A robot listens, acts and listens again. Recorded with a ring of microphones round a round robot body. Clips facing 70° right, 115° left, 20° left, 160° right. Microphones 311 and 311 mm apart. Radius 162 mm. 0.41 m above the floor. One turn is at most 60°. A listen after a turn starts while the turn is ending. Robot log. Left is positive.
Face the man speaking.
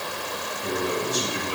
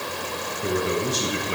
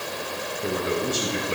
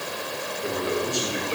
note: The man speaking: 90° left.
cmd yaw +60
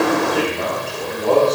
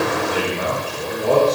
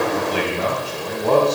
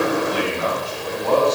note: The man speaking is now 30° left.
cmd yaw +30
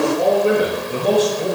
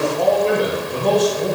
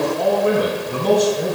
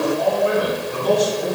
note: The man speaking is now 15° left.
cmd yaw +15
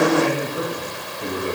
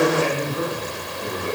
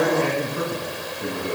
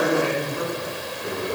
end: Facing the man speaking.